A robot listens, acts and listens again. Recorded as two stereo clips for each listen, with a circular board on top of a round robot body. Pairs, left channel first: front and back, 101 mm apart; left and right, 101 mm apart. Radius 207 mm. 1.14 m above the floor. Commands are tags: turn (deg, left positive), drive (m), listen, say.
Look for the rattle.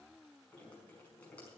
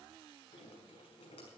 <listen/>
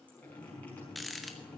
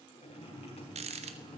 <turn deg="-90"/>
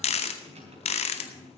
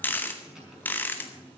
<turn deg="15"/>
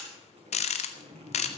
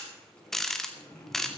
<say>Found it: a rattle, straight ahead, under 1 m away.</say>